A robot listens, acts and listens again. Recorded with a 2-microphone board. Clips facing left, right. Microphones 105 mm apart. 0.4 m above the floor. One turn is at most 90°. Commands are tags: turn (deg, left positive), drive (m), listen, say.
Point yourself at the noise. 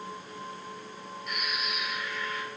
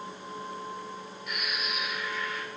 <turn deg="-30"/>
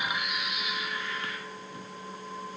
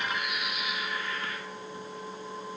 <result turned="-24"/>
<turn deg="25"/>
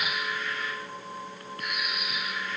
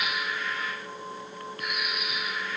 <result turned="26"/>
<say>Facing the bird.</say>